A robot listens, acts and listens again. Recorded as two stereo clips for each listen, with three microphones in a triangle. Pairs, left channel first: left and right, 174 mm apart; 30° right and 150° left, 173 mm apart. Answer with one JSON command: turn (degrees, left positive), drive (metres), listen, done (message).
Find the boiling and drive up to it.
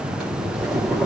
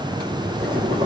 {"turn": 180}
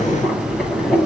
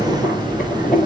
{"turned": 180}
{"drive": 1.0}
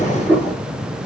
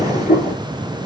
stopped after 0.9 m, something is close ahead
{"done": "Something is in my way. I am facing the boiling but have not reached it."}